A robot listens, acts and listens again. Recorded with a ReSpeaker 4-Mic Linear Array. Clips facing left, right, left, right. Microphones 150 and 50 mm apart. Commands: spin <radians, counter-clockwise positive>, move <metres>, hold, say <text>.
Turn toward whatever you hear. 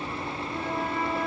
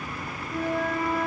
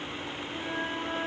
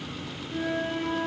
spin -1.57
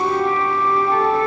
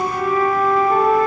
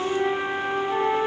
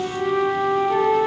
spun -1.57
say Facing the flute.